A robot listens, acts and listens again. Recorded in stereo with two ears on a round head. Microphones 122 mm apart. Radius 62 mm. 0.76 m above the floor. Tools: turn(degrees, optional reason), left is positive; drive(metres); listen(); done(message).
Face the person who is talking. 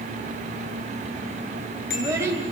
turn(degrees=-20, reason="The child speaking: about 20° right or 160° right.")
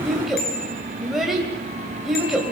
done("Found it: a child speaking, straight ahead, 2 to 4 m away.")